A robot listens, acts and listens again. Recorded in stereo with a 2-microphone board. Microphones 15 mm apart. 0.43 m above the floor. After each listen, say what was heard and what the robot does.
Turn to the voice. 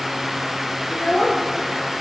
The child speaking: about 70° left or 110° left. Turn 70° left.
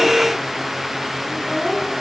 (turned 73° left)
So it is at 35° left. Turn 35° left.
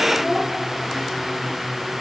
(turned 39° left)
Found it: a child speaking, straight ahead.